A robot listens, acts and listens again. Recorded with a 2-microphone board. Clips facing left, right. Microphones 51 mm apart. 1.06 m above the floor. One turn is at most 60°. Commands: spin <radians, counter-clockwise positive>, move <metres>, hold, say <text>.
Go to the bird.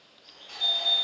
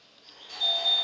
spin -0.96
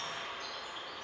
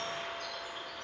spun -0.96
spin -1.05
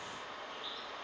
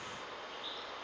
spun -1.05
move 1.0
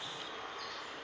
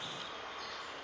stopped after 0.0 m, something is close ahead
say Blocked. The bird is further on, straight ahead.